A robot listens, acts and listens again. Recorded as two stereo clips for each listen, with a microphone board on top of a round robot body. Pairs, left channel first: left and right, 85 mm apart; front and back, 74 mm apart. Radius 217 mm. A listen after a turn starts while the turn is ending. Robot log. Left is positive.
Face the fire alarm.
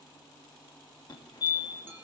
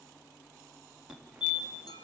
note: The fire alarm: 105° left.
cmd yaw +105
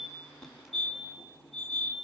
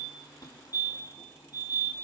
end: Facing the fire alarm.